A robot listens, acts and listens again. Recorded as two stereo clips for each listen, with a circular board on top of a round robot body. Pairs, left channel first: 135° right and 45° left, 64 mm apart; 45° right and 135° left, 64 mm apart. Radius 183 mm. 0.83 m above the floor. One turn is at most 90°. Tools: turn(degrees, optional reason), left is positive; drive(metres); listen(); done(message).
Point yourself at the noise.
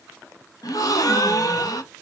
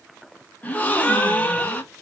turn(degrees=-90, reason="The gasp: 110° right.")
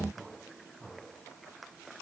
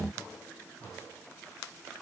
turn(degrees=-20, reason="Nothing new. It was at 20° right.")
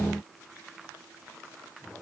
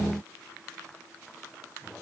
done("Facing where the gasp came from. I can't hear it now.")